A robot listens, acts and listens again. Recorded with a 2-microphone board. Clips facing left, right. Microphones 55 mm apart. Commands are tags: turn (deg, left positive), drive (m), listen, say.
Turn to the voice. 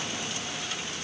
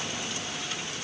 <listen/>
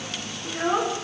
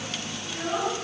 <turn deg="40"/>
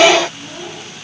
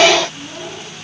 <say>Facing the child speaking.</say>